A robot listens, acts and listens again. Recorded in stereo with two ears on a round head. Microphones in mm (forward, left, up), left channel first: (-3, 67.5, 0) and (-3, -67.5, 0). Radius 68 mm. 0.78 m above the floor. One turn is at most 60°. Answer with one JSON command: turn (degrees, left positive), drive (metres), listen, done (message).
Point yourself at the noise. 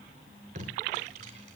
{"turn": -50}
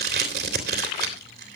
{"turn": -60}
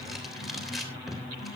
{"done": "Facing the tape being pulled."}